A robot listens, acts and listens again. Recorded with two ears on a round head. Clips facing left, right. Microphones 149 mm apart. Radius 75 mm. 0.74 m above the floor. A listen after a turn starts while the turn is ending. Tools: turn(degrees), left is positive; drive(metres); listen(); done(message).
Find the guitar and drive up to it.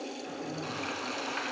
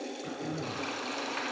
listen()
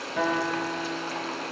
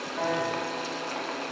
turn(degrees=90)
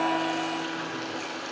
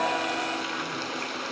listen()
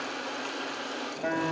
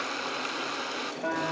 drive(metres=1.0)
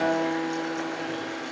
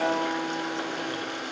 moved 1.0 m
turn(degrees=10)
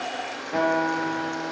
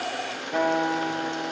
drive(metres=1.0)
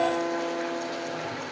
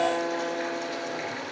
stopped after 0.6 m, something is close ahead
done("I am next to the guitar.")